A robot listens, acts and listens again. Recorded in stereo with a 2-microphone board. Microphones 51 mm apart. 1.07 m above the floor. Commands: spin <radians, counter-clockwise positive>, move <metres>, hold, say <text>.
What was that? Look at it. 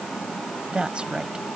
spin -0.35
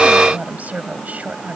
spin -0.52
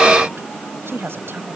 spin -2.27
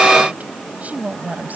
spin -0.52
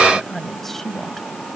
say Found it: a woman speaking, straight ahead.